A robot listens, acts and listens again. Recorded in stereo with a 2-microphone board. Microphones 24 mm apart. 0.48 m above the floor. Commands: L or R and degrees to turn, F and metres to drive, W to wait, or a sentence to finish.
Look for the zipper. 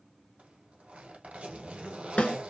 R70
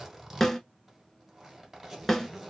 R20
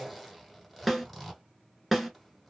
Facing the zipper, 1 to 2 m away.